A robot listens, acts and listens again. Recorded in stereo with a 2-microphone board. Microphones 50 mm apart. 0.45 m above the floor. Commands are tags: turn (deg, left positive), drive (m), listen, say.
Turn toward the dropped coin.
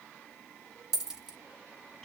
<turn deg="-30"/>
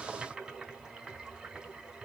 <listen/>
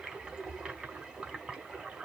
<say>I heard a dropped coin, but can't make it out now. It was about 20° left or 140° right.</say>